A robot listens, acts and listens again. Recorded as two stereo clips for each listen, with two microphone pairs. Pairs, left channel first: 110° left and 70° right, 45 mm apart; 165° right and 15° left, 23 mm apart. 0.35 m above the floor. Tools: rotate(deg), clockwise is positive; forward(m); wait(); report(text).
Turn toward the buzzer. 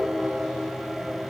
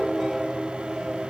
wait()
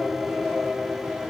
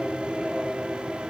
wait()
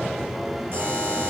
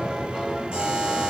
rotate(30)
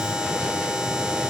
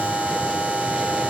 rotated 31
report("Facing the buzzer, over 4 m away.")